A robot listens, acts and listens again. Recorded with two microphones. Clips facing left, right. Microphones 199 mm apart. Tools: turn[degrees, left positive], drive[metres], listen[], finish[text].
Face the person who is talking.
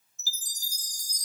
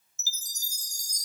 Action: listen[]
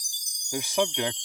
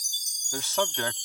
Action: turn[30]
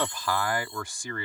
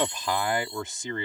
Thought: So it is at 25° right.
Action: turn[-25]
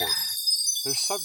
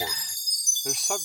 Action: listen[]
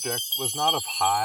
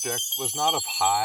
Action: finish[Facing the man speaking.]